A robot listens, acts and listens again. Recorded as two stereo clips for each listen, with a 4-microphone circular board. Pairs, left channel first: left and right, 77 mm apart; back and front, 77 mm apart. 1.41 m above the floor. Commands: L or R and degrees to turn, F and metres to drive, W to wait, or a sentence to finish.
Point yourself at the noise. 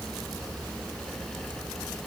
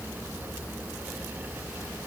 W
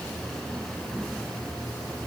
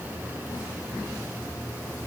W
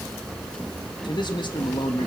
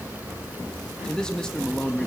L100
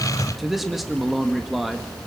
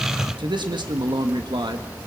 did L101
Found it: a man speaking, straight ahead, 1 to 2 m away.